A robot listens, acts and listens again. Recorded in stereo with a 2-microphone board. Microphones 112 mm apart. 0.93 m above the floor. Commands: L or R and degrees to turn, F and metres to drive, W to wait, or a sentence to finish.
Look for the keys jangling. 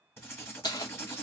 L35
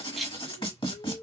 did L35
Facing the keys jangling, under 1 m away.